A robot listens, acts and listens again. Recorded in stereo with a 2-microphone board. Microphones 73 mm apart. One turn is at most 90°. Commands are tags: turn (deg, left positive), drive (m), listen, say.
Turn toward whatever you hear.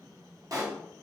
<turn deg="-50"/>
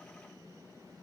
<listen/>
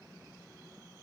<say>I heard a pop, but can't make it out now. It was about straight ahead or 80° right.</say>